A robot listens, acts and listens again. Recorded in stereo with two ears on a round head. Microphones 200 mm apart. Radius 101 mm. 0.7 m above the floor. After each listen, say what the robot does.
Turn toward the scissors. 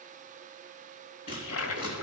Turn 40° left.
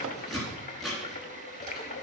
Found it: scissors, straight ahead.